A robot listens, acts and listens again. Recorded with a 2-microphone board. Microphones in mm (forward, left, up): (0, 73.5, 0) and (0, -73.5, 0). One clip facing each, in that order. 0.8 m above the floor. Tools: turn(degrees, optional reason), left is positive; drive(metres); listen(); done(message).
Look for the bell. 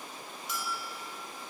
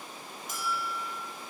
turn(degrees=-50, reason="The bell: about 50° right or 130° right.")
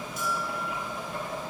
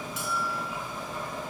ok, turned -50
turn(degrees=-80, reason="So it is at 80° right.")
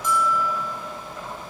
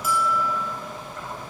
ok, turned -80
turn(degrees=-10, reason="The bell is now 10° right.")
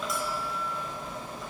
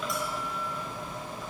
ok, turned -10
listen()
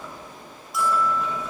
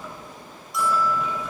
done("Facing the bell, 2 to 4 m away.")